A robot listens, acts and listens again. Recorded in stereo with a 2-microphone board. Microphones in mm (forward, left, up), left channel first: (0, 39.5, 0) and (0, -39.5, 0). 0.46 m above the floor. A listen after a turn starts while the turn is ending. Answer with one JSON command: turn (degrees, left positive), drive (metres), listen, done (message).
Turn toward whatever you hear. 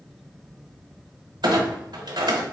{"turn": -70}
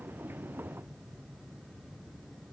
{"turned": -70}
{"listen": true}
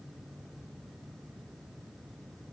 {"done": "I heard a clunk, but can't make it out now. It was about straight ahead or 40° right."}